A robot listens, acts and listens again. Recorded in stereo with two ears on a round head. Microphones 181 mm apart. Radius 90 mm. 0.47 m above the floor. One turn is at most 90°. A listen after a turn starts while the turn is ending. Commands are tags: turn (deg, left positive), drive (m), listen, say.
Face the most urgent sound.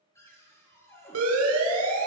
<turn deg="-90"/>
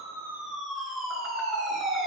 <say>Found it: a siren, straight ahead, over 4 m away.</say>